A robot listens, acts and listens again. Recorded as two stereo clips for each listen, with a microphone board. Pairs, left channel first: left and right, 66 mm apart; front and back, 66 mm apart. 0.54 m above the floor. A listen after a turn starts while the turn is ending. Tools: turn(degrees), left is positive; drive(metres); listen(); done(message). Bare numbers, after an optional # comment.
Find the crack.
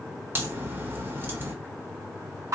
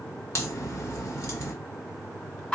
# The crack: 40° right.
turn(-40)
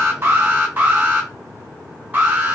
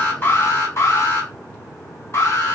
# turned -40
done("I heard a crack from this way, but can't make it out now.")